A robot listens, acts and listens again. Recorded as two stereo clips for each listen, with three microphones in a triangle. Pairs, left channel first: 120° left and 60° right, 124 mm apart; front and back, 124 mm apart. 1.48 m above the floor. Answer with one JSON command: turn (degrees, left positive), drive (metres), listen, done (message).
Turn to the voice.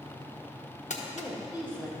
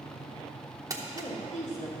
{"turn": 15}
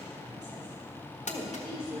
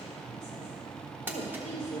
{"turn": -10}
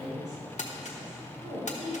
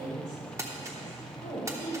{"done": "Facing the woman speaking."}